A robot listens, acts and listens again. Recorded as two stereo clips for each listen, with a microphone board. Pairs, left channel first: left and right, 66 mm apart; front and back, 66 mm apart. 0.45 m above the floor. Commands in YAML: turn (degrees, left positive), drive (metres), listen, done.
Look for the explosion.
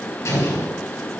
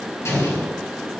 turn: 45
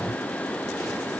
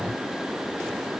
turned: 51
done: "I heard an explosion from this way, but can't make it out now."